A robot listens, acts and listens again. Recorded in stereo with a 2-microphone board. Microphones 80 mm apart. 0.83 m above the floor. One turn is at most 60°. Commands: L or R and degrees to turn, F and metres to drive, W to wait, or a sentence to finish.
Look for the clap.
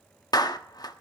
L55
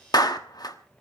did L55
L60
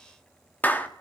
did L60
L25
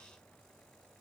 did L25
W
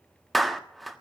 Found it: a clap, straight ahead.